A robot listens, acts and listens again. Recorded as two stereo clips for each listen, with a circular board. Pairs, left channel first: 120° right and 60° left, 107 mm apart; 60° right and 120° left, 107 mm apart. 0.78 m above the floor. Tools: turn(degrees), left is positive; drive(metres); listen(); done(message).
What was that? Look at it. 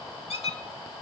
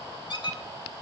turn(degrees=-100)
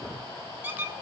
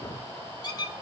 turn(degrees=-10)
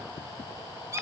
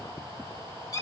done("Facing the squeak.")